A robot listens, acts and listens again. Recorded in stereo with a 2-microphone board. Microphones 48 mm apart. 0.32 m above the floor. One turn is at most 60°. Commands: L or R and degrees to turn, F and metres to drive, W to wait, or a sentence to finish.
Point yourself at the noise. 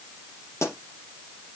L60
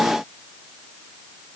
W
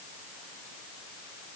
I heard a pop, but can't make it out now. It was about 10° left or 50° left.